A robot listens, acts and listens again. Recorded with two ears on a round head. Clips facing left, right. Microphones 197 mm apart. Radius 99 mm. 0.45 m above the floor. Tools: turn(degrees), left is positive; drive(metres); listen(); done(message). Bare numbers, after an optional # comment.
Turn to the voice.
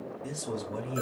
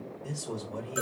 # The man speaking: about 25° left or 155° left.
turn(25)
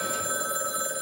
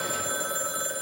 listen()
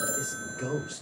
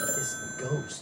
done("Found it: a man speaking, straight ahead.")